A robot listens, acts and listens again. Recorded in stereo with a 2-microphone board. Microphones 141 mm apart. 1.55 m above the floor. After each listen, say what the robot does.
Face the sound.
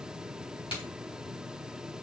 Turn 35° left.
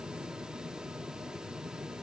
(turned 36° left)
Keep listening.
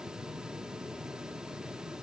I heard a crack, but can't make it out now. It was about straight ahead or 105° left.